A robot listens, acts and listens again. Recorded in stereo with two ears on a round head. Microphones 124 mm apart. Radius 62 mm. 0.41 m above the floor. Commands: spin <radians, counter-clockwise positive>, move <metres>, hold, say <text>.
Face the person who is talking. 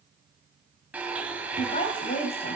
spin 0.79
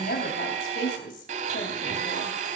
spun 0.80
spin 1.48
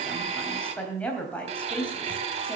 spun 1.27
spin 0.17
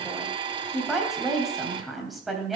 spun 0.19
say Found it: a woman speaking, straight ahead.